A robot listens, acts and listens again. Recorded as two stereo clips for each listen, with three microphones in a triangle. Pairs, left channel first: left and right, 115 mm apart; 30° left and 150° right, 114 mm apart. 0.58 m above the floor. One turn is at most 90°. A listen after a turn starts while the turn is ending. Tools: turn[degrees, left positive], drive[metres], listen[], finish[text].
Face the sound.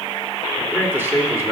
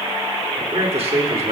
Thought: The man speaking: 155° right.
Action: turn[-90]
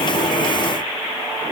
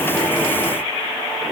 Thought: Nothing new. It was at 65° right.
Action: turn[-65]
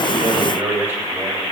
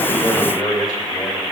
Thought: The man speaking is now 20° right.
Action: turn[-20]
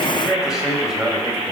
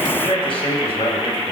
Action: finish[Facing the man speaking, 2 to 4 m away.]